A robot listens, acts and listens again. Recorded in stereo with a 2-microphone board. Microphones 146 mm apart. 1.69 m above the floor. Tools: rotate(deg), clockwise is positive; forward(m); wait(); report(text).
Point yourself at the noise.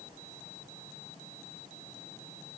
wait()
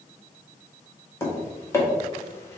rotate(-20)
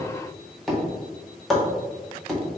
report("Facing the tapping.")